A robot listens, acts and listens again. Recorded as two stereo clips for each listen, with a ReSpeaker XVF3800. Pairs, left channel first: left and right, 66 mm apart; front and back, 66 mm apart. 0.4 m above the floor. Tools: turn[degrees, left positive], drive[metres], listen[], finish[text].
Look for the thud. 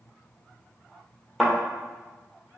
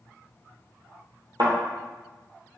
Thought: The thud: 175° right.
Action: turn[-175]
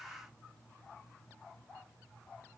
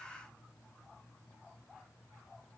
Action: finish[Facing where the thud came from. I can't hear it now.]